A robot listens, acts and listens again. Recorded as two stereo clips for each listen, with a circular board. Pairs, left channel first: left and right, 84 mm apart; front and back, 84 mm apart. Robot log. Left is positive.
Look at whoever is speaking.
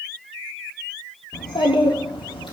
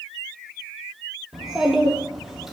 note: The child speaking: 95° left.
cmd yaw +95
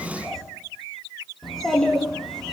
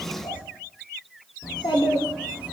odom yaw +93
end: Facing the child speaking.